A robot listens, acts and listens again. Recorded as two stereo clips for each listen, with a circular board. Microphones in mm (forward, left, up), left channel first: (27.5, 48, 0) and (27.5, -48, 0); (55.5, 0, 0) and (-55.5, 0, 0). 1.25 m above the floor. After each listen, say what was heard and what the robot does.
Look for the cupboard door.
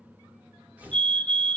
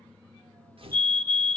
Keep listening.
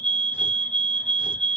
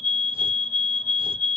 Keep listening.
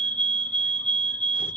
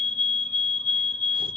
I can't make out a cupboard door, only a fire alarm and tearing paper.